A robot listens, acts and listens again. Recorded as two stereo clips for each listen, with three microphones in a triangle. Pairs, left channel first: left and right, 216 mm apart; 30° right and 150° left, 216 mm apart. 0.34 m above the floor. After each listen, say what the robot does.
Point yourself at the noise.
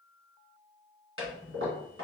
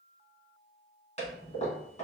Turn 90° right.
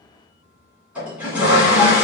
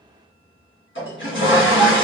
Found it: a toilet flushing, straight ahead, 1 to 2 m away.